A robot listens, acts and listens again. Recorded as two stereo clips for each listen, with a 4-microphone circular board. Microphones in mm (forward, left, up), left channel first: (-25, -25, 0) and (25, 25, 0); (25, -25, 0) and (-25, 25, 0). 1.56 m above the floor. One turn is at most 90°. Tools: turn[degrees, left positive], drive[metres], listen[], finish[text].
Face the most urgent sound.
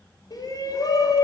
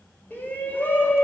Thought: The shout: 110° right.
Action: turn[-90]
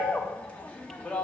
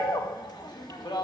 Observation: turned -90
Thought: The shout is now 65° right.
Action: turn[-65]
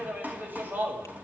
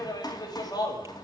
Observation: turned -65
Thought: The shout is now 20° right.
Action: turn[-20]
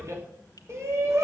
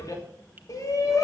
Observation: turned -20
Action: finish[Found it: a shout, straight ahead, 2 to 4 m away.]